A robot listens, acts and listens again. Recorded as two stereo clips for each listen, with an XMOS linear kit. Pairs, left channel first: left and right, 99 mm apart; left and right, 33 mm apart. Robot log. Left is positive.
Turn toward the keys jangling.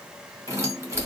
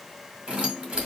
note: The keys jangling: about 30° right or 150° right.
cmd yaw -30
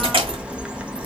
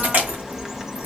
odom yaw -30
note: So it is at 115° right.
cmd yaw -115
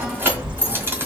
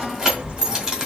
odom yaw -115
note: The keys jangling is now 25° right.
cmd yaw -25
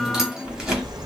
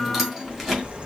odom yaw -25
end: Found it: keys jangling, straight ahead.